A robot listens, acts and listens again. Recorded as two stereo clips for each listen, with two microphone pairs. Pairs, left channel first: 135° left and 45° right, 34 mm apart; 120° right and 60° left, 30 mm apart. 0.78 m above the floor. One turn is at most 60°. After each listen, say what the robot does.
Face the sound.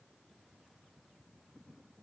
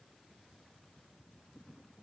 Keep listening.
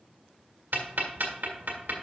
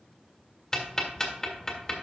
Turn 55° right.
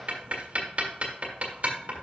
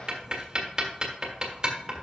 Found it: ticking, straight ahead, 1 to 2 m away.